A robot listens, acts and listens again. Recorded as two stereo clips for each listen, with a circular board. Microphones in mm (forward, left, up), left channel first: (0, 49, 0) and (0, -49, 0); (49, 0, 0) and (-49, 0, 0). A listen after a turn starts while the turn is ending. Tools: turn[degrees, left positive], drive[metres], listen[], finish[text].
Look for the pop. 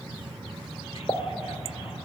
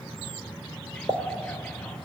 Thought: The pop: 140° left.
Action: turn[140]
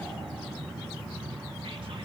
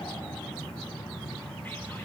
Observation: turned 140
Action: finish[Facing where the pop came from. I can't hear it now.]